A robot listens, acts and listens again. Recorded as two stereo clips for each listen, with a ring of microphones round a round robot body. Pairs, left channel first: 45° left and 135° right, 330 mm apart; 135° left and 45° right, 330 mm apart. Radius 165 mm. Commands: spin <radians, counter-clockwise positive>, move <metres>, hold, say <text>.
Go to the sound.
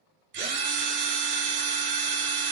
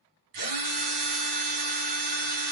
spin -1.22
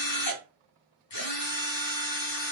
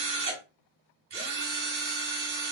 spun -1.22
spin 0.17
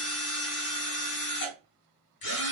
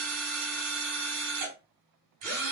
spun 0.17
move 1.0
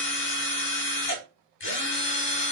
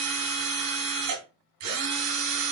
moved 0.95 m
spin -0.17
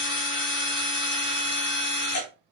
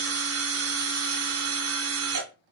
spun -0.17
move 1.0
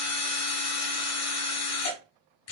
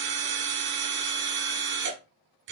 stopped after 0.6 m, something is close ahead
say I am next to the drill.